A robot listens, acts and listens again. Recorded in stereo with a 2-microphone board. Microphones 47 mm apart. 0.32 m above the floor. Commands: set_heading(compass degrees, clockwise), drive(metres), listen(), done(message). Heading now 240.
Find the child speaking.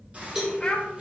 set_heading(220)
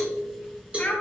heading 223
set_heading(78)
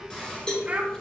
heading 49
set_heading(79)
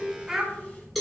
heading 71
set_heading(81)
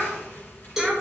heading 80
done("Found it: a child speaking, straight ahead.")